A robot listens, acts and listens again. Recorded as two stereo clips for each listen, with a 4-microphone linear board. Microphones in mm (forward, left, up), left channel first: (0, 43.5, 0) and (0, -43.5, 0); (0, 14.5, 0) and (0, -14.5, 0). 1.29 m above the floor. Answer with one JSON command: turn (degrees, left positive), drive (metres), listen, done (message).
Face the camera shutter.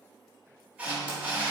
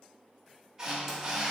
{"turn": -15}
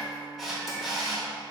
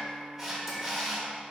{"done": "Found it: a camera shutter, straight ahead, 1 to 2 m away."}